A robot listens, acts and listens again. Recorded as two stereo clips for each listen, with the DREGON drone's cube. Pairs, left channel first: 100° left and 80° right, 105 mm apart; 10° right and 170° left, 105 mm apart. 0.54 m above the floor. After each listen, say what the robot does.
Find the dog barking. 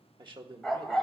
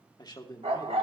Turn 170° right.
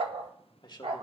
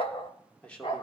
Turn 50° right.
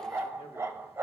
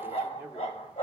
Turn 10° right.
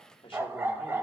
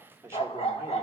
Facing the dog barking, under 1 m away.